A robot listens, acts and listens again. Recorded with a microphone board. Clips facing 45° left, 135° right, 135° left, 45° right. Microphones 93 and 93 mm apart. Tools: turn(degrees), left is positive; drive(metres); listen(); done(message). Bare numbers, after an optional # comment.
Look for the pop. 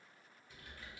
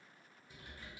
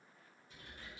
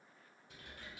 listen()
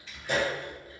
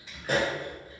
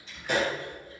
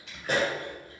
# The pop: 90° right.
turn(-90)
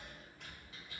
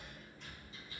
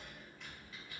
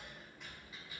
done("Facing where the pop came from. I can't hear it now.")